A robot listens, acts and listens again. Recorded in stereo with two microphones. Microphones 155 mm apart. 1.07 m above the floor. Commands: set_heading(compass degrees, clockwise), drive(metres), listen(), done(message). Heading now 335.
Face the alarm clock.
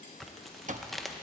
set_heading(30)
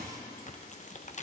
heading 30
set_heading(95)
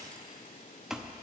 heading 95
done("Facing the alarm clock, under 1 m away.")